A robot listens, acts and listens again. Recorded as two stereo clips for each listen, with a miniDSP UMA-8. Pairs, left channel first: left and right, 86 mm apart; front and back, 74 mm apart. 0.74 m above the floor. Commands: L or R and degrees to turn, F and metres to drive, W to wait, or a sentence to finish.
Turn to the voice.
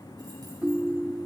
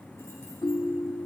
W
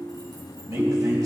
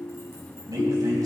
R145
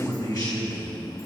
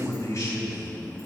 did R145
L50
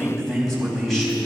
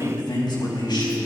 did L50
Facing the man speaking.